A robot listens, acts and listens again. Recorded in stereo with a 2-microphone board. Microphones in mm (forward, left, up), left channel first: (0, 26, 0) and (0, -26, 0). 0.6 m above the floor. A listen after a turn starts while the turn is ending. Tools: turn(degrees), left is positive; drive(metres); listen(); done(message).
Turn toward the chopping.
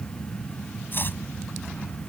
turn(degrees=45)
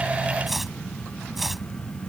done("Facing the chopping.")